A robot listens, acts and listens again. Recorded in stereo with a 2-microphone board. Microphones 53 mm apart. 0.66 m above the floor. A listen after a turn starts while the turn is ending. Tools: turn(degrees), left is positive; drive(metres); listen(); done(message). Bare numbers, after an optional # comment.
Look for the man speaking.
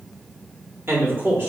# The man speaking: about 40° right or 140° right.
turn(-40)
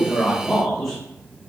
done("Found it: a man speaking, straight ahead.")